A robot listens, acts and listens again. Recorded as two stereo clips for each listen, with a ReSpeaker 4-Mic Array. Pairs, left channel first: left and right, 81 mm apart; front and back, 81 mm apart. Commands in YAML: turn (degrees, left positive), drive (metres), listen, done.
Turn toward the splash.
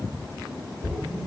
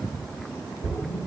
turn: 10
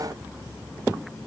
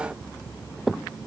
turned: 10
done: "Facing where the splash came from. I can't hear it now."